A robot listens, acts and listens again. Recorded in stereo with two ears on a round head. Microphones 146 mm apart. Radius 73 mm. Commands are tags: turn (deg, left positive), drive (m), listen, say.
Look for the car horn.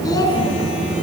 <listen/>
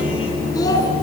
<listen/>
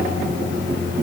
<say>I can't make out a car horn to turn to.</say>